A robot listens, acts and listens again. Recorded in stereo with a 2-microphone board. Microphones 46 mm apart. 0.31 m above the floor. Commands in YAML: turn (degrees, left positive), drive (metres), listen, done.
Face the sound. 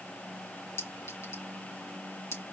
turn: 70
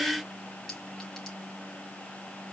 listen: true
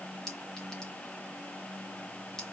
turn: 10
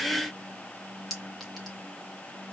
done: "Facing the clink."